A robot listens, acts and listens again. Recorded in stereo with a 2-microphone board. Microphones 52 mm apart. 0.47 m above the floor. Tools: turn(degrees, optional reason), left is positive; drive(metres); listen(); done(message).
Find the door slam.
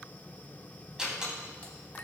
turn(degrees=-15, reason="The door slam: about 15° right or 165° right.")
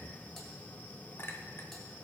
listen()
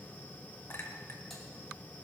done("I heard a door slam, but can't make it out now. It was about straight ahead or 150° right.")